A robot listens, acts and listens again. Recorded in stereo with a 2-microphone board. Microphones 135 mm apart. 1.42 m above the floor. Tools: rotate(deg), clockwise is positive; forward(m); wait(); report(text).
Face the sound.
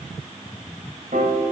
rotate(65)
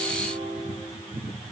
rotate(45)
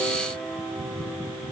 report("Facing the piano, over 4 m away.")